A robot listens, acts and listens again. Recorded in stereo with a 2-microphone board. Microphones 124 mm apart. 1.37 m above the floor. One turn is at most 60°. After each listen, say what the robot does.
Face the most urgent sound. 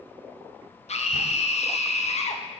Turn 60° left.
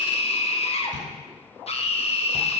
Turn 60° left.
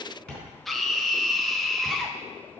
Found it: a scream, straight ahead, 1 to 2 m away.